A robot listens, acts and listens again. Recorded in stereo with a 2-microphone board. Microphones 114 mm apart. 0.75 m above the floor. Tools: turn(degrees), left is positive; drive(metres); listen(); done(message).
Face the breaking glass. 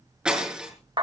turn(degrees=-30)
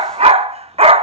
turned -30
listen()
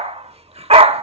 done("I heard breaking glass, but can't make it out now. It was about 25° left or 145° right.")